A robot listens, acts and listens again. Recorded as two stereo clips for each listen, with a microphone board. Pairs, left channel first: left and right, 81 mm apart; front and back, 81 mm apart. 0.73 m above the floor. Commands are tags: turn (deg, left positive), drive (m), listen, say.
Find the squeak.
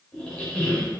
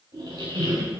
<turn deg="170"/>
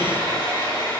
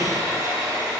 <listen/>
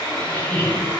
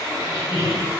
<turn deg="20"/>
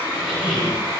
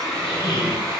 <say>Facing the squeak, 1 to 2 m away.</say>